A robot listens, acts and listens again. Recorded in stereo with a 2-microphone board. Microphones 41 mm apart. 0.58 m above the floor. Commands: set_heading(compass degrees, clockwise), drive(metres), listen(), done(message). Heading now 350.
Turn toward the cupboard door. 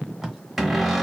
set_heading(320)
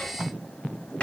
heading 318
set_heading(168)
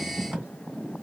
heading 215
set_heading(170)
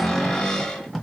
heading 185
set_heading(170)
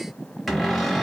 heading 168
done("Facing the cupboard door.")